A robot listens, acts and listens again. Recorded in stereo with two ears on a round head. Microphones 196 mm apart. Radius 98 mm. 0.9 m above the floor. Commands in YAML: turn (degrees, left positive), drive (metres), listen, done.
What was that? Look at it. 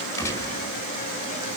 turn: 30
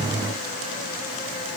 listen: true
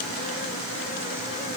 done: "I heard a gunshot, but can't make it out now. It was about 20° right or 140° left."